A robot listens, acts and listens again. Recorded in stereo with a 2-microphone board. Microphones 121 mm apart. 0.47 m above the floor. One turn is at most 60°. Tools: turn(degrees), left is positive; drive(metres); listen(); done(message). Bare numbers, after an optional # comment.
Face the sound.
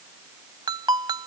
# The ringtone: about 40° right or 140° right.
turn(-40)
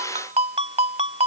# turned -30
# So it is at 110° right.
turn(-60)
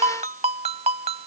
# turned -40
# The ringtone is now 70° right.
turn(-60)
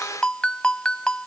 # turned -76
# The ringtone is now 10° left.
turn(10)
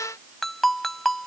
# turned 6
done("Facing the ringtone.")